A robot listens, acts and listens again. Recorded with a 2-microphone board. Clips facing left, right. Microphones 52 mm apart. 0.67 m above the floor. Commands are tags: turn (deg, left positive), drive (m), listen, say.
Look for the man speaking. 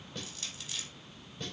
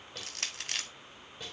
<listen/>
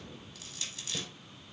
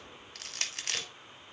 <listen/>
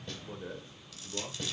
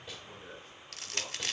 <turn deg="20"/>
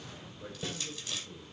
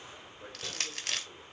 <turn deg="-25"/>
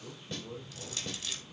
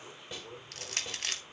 <turn deg="-10"/>
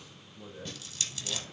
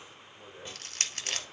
<say>Facing the man speaking.</say>